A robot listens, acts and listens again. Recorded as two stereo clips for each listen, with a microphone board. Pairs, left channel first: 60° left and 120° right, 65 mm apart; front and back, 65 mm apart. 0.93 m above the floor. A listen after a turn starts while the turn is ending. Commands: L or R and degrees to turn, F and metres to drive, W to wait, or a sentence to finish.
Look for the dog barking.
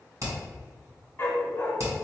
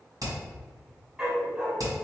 L110
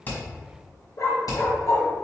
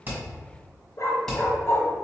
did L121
L40
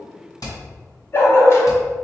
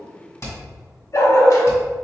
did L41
L25
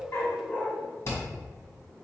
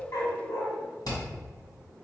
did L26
Found it: a dog barking, straight ahead, 1 to 2 m away.